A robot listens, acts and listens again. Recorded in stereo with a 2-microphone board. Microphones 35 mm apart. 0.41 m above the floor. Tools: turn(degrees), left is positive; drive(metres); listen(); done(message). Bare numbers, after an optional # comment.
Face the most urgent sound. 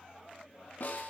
listen()
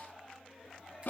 listen()
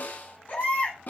# The baby crying: about 40° left or 140° left.
turn(40)
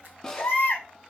# So it is at 95° left.
turn(95)
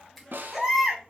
done("Found it: a baby crying, straight ahead, 1 to 2 m away.")